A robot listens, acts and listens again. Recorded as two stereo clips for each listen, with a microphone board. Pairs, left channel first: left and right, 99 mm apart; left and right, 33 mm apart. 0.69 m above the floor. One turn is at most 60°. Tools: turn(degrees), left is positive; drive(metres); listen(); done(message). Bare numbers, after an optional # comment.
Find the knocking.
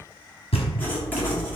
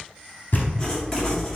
# The knocking: about 70° left or 110° left.
turn(60)
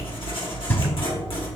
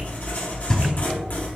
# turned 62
# So it is at 25° left.
turn(25)
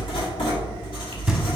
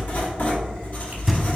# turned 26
done("Facing the knocking, under 1 m away.")